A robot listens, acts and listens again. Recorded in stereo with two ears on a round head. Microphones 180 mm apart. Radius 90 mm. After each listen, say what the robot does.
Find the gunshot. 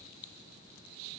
Keep listening.
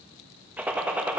Turn 30° right.
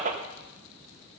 Turn 140° right.
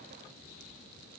I heard a gunshot from this way, but can't make it out now.